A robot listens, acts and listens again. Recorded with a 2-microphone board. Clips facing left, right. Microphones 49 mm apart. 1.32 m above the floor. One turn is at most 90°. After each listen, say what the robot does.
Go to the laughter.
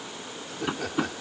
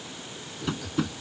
Turn 60° left.
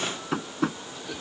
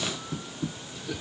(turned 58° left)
Drive 1.0 m forward.
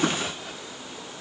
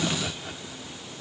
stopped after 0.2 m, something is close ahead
Something is in my way. I am facing the laughter but have not reached it.